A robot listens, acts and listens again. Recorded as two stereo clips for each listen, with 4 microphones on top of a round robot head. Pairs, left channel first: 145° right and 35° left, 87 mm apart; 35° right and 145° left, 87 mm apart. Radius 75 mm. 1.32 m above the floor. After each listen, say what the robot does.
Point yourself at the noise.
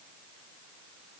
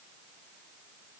Keep listening.
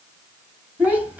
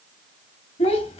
Turn 40° right.
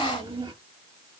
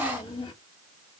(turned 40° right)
Facing the child speaking.